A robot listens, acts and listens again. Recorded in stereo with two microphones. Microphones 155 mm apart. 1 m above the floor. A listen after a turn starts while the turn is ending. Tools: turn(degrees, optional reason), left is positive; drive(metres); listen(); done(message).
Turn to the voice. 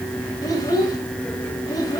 turn(degrees=25, reason="The child speaking: about 25° left or 155° left.")
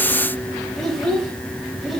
done("Facing the child speaking.")